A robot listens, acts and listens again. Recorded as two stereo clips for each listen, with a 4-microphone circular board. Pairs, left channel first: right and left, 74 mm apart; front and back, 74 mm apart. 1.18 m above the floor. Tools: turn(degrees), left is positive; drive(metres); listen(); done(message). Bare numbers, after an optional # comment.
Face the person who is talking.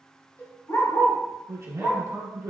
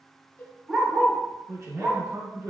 # The man speaking: 125° left.
turn(125)
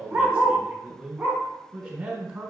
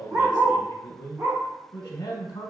# The man speaking is now 10° left.
turn(10)
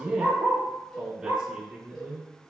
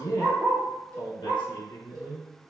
done("Found it: a man speaking, straight ahead.")